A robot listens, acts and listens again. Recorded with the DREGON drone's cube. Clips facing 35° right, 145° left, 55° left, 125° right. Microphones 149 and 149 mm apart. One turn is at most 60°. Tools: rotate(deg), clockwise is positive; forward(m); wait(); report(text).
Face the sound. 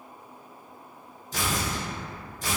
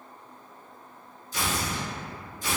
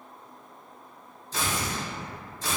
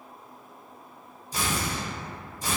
rotate(45)
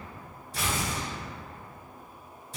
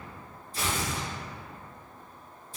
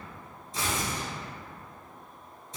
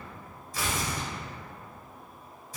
rotate(10)
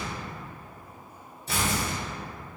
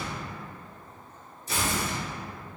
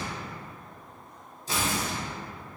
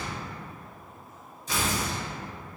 report("Facing the tearing paper, under 1 m away.")